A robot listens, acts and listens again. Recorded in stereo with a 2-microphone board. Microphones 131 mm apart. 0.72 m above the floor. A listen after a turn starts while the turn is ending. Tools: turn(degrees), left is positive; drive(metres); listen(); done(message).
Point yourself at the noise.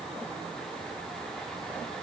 listen()
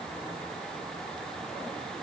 listen()
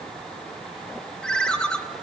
turn(degrees=30)
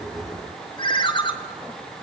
turn(degrees=140)
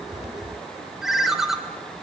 done("Found it: a ringtone, straight ahead, 1 to 2 m away.")